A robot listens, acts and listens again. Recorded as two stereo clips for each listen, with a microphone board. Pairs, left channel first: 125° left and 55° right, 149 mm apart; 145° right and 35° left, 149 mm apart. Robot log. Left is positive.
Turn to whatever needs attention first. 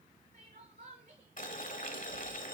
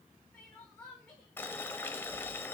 note: The crying: 75° right.
cmd yaw -75
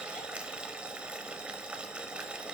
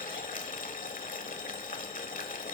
cmd idle
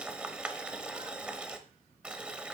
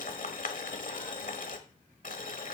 cmd idle
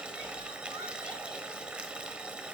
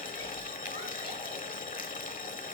end: I heard crying from this way, but can't make it out now.